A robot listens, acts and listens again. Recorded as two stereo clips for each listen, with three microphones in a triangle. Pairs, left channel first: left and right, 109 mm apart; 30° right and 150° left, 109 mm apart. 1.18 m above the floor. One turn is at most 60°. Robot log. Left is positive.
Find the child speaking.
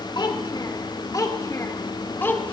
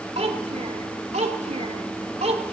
note: The child speaking: 160° left.
cmd yaw +60
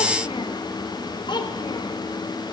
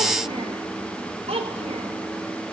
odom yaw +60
note: The child speaking is now 130° left.
cmd yaw +60
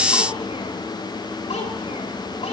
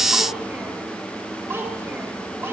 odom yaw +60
note: The child speaking is now 85° left.
cmd yaw +60
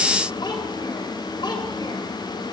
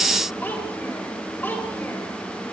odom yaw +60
note: The child speaking is now 40° left.
cmd yaw +40
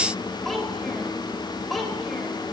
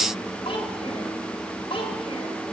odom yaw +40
end: Found it: a child speaking, straight ahead.